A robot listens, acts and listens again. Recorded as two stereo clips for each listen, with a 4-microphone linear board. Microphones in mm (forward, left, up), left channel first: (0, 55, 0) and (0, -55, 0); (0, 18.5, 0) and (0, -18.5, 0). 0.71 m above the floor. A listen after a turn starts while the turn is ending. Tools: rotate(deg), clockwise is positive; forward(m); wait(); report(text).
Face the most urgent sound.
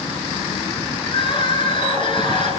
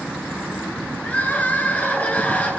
rotate(-50)
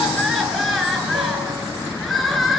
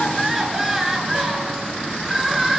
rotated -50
report("Found it: crying, straight ahead.")